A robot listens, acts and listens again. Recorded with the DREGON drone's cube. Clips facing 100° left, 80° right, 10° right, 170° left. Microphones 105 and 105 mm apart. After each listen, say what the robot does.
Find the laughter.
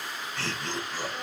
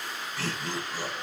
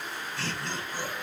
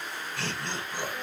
Turn 165° right.
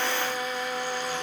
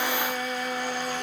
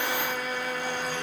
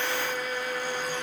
Keep listening.
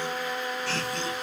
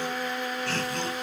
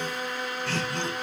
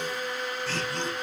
Turn 40° right.
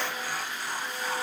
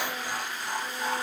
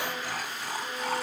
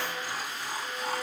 Turn 10° right.
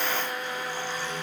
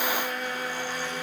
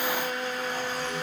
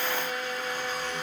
Keep listening.
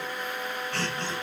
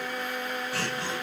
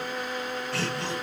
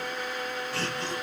Facing the laughter.